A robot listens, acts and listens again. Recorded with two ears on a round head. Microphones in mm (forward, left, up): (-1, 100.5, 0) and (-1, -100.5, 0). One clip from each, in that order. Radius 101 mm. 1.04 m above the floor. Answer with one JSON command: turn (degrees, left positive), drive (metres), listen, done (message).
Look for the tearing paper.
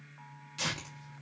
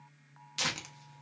{"turn": -45}
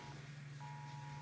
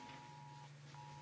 {"listen": true}
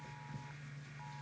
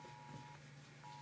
{"done": "Facing the tearing paper."}